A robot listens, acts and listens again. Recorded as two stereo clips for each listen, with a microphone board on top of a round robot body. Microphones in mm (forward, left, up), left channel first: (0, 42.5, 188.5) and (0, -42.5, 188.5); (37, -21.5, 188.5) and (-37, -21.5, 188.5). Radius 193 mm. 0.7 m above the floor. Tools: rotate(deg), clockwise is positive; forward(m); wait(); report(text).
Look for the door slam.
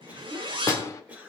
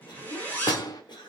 rotate(-35)
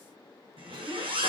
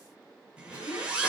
report("Facing where the door slam came from. I can't hear it now.")